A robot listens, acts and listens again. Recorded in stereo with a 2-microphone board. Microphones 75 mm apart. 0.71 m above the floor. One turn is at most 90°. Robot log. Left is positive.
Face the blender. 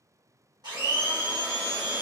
note: The blender: about 70° right or 110° right.
cmd yaw -70
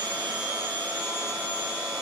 note: So it is at 25° right.
cmd yaw -25
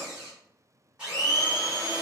note: The blender is now 15° right.
cmd yaw -15
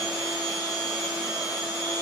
end: Found it: a blender, straight ahead, 1 to 2 m away.